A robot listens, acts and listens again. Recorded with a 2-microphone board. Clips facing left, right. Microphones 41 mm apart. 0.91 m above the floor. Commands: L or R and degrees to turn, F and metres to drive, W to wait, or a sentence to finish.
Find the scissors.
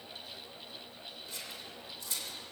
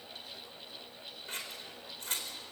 R45
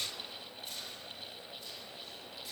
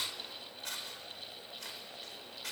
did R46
R85
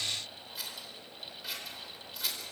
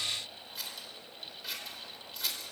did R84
Found it: scissors, straight ahead.